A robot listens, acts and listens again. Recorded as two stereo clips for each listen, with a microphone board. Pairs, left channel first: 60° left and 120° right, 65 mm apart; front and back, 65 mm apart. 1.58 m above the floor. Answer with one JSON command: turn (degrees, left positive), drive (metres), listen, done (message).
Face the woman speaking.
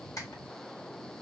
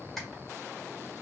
{"listen": true}
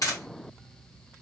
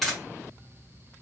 {"listen": true}
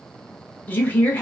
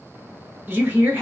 {"turn": 125}
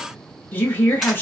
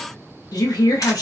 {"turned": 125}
{"done": "Facing the woman speaking."}